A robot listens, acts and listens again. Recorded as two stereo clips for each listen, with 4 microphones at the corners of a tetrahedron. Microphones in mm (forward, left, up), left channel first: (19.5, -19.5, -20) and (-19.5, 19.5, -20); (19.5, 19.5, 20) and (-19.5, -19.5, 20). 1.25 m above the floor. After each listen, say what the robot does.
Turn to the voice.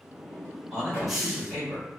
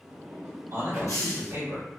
Turn 135° right.
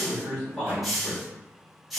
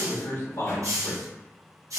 Turn 40° left.
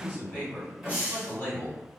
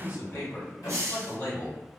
Turn 10° left.
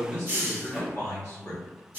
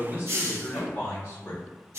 Facing the man speaking, 1 to 2 m away.